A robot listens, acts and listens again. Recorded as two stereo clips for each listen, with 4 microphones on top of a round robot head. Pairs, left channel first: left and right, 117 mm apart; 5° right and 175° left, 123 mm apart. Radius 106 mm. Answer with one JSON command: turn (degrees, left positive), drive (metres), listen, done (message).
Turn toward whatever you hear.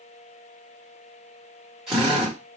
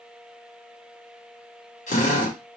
{"done": "Facing the drill, 1 to 2 m away."}